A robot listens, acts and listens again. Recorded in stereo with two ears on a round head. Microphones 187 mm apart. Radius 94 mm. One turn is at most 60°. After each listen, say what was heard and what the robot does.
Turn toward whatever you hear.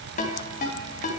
The ringtone: about 40° left or 140° left. Turn 40° left.
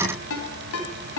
So it is at 100° left. Turn 60° left.
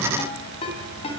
The ringtone is now 30° left. Turn 30° left.
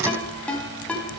Found it: a ringtone, straight ahead.